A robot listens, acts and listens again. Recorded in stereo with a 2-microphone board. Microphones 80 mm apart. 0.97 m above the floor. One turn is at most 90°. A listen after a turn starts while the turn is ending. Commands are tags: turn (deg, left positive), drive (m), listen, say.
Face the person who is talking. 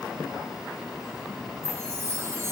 <listen/>
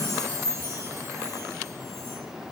<listen/>
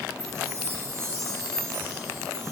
<say>I can't make out anyone speaking, only a chime.</say>